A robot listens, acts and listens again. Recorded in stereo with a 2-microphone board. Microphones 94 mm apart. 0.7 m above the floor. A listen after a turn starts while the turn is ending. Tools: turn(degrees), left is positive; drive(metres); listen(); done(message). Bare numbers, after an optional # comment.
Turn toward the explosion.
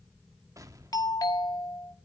# The explosion: about 40° right or 140° right.
turn(-40)
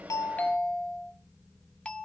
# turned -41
listen()
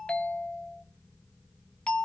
done("I heard an explosion, but can't make it out now. It was about straight ahead or 100° right.")